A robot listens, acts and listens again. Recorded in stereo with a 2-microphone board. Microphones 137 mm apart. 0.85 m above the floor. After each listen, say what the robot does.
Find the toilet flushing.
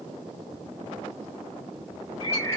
Keep listening.
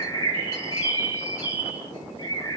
Keep listening.
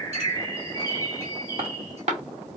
I can't make out a toilet flushing to turn to.